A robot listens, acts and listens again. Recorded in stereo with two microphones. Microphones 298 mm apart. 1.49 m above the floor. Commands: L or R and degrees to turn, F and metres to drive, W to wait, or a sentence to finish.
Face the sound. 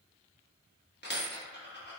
L35
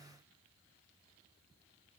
W
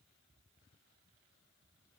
I heard a dropped coin, but can't make it out now. It was about straight ahead or 110° left.